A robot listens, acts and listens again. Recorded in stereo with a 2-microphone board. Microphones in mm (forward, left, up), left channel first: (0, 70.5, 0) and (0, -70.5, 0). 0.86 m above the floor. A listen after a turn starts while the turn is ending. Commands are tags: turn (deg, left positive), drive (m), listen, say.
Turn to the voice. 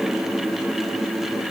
<listen/>
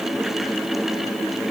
<listen/>
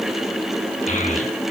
<turn deg="60"/>
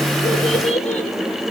<turn deg="55"/>
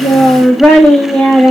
<turn deg="10"/>
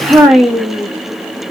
<say>Found it: a child speaking, straight ahead, 1 to 2 m away.</say>